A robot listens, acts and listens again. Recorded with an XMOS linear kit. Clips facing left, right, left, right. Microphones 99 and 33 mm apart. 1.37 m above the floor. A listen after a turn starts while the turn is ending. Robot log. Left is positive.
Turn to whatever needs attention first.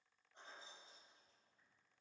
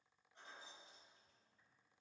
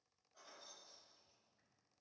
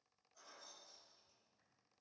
cmd idle
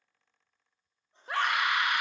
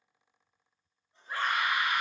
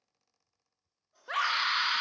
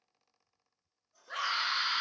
note: The scream: about 75° left or 105° left.
cmd yaw +75
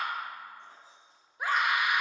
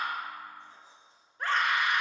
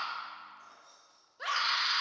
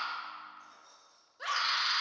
note: So it is at 10° left.
cmd yaw +10
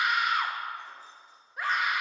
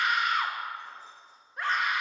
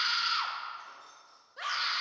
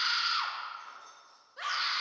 end: Facing the scream.